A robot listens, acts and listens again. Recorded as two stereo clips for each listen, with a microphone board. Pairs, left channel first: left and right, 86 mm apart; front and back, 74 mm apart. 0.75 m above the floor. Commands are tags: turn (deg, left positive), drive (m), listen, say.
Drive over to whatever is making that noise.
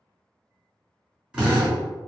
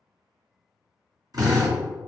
<turn deg="-165"/>
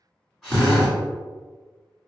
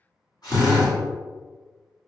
<drive m="1.0"/>
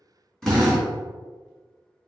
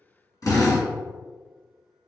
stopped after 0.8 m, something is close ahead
<turn deg="10"/>
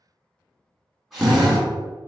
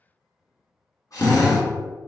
<say>Arrived at the drill, straight ahead.</say>